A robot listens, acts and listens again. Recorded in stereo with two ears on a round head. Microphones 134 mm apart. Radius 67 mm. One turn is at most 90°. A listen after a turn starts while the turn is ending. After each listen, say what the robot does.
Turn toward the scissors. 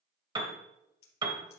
Turn 90° left.
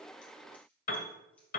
Keep listening.
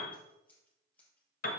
Turn 10° left.
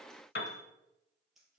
Facing the scissors.